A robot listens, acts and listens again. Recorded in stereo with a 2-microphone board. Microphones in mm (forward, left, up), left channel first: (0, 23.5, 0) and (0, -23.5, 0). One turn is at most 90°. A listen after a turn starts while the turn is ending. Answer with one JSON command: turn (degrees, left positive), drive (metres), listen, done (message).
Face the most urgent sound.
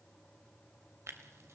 {"listen": true}
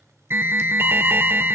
{"turn": -50}
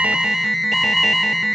{"done": "Facing the alarm, under 1 m away."}